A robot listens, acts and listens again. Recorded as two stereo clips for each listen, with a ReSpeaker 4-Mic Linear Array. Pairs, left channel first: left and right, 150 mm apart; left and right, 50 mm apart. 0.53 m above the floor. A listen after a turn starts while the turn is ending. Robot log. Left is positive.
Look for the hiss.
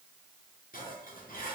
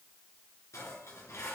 cmd idle
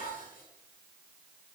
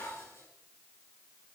cmd idle
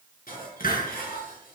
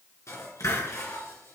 note: The hiss: about 75° left or 105° left.
cmd yaw +75
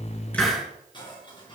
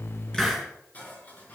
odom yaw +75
end: Found it: a hiss, straight ahead, over 4 m away.